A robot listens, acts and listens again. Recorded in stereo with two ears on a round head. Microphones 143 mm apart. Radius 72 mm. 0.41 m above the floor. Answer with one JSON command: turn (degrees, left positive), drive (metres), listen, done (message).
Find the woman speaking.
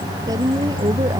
{"turn": -25}
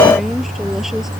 {"done": "Facing the woman speaking."}